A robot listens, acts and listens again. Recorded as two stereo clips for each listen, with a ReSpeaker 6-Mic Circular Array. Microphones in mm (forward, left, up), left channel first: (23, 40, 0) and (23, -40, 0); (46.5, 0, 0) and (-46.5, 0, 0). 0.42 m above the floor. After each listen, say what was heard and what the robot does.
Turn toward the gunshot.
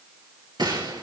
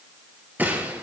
The gunshot: 110° right. Turn 110° right.
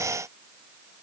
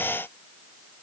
Facing where the gunshot came from. I can't hear it now.